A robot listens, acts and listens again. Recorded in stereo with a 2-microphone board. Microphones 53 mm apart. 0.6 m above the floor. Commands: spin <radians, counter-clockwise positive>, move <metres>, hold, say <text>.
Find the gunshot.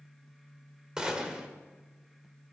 spin -0.52
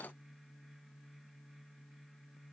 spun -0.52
hold
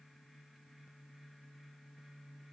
say I heard a gunshot, but can't make it out now. It was about 15° left or 135° right.